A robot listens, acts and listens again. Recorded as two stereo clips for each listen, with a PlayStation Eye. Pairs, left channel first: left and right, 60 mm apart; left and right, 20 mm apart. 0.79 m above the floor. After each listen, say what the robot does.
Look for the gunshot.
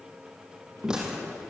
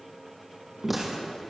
Turn 30° right.
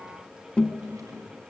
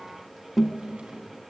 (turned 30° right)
Keep listening.
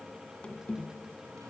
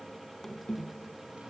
I heard a gunshot, but can't make it out now. It was about 20° left or 140° right.